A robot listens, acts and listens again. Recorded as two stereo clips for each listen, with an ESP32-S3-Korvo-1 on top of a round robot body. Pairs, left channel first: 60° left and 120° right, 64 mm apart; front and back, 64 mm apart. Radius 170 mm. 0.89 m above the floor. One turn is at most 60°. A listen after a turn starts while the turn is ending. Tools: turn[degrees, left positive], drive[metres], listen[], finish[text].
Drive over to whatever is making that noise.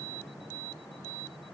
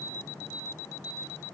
Action: listen[]
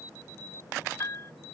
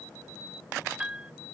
Thought: The piano: 105° left.
Action: turn[60]
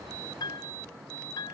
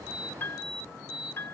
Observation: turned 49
Thought: The piano is now 55° left.
Action: turn[55]
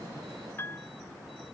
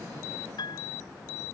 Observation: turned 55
Action: drive[1.0]
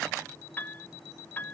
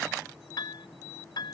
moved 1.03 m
Action: drive[1.0]
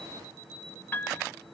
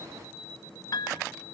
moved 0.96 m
Action: drive[1.0]
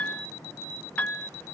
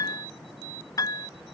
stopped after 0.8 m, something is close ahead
Action: finish[I am next to the piano.]